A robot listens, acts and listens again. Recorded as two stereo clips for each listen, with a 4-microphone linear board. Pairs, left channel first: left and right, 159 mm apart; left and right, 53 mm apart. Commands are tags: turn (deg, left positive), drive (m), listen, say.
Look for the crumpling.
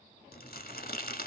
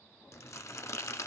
<turn deg="70"/>
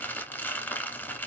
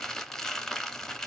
<turn deg="15"/>
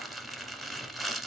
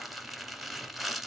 <say>Found it: crumpling, straight ahead.</say>